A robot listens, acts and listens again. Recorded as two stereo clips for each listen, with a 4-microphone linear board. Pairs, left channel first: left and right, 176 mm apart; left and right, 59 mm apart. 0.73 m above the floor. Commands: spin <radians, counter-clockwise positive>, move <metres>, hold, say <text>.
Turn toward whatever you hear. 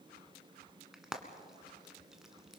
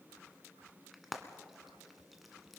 spin -0.52
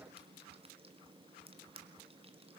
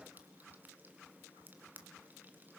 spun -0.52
spin -2.53
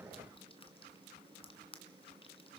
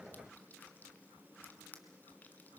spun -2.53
spin 0.61
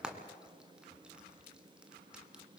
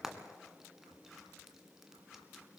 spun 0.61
say Facing the frying, 1 to 2 m away.